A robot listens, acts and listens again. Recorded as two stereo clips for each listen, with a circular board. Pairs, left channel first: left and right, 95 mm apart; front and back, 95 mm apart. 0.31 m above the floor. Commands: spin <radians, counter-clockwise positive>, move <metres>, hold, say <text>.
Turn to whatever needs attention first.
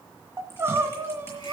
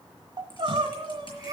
spin -2.62
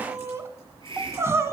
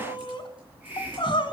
spin -0.52
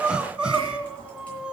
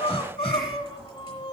spin -0.17
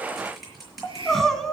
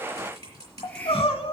say Found it: crying, straight ahead, under 1 m away.